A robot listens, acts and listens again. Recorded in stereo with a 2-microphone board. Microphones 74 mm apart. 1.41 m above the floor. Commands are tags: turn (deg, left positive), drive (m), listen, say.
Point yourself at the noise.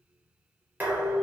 <turn deg="-25"/>
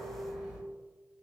<say>Facing the dishes clattering.</say>